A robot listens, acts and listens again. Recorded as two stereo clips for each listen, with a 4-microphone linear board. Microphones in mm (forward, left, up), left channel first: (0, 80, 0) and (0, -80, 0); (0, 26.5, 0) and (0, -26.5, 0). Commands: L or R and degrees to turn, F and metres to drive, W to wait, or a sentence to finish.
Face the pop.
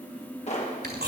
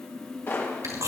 L45
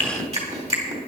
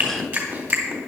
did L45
W
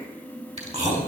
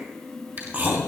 I heard a pop, but can't make it out now. It was about straight ahead or 90° left.